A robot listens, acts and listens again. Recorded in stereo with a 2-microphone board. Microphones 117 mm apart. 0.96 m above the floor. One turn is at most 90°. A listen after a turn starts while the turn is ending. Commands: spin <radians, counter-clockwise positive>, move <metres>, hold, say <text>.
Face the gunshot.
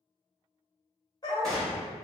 spin 0.52
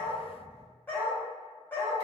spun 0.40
hold
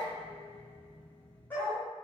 say I heard a gunshot, but can't make it out now. It was about 20° right or 155° left.